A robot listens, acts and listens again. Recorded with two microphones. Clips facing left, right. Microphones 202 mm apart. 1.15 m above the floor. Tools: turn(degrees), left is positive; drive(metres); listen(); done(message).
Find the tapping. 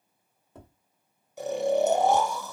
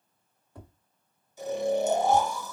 turn(degrees=25)
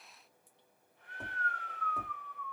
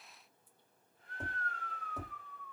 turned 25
done("Found it: tapping, straight ahead, 1 to 2 m away.")